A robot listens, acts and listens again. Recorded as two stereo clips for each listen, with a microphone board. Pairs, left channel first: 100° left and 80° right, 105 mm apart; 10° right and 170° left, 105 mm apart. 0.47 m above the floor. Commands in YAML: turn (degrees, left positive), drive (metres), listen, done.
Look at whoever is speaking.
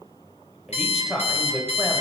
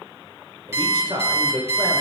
turn: -165
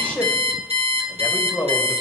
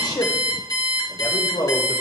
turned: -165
turn: 25
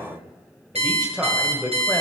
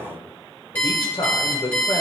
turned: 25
done: "Facing the man speaking, 1 to 2 m away."